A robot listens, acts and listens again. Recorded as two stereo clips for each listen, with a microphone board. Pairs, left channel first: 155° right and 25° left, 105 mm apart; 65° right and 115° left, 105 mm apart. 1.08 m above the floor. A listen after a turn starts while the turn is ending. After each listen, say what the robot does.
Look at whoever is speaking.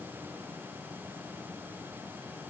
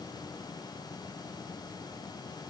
Keep listening.
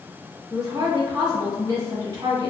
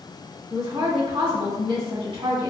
Turn 75° left.
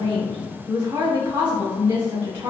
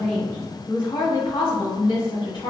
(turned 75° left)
Turn 20° right.
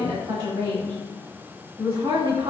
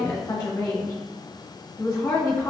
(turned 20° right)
Facing the woman speaking, 1 to 2 m away.